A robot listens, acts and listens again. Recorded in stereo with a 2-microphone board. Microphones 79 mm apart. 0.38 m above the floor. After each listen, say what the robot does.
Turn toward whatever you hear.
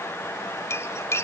Turn 35° left.
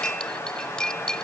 Turn 10° left.
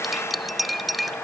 Found it: cutlery clinking, straight ahead.